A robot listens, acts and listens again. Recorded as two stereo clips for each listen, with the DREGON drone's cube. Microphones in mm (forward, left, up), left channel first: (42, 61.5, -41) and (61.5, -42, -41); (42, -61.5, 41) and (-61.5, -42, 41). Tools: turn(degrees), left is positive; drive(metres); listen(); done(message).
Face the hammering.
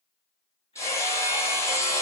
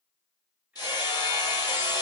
turn(degrees=40)
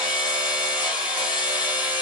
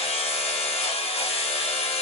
done("Facing the hammering.")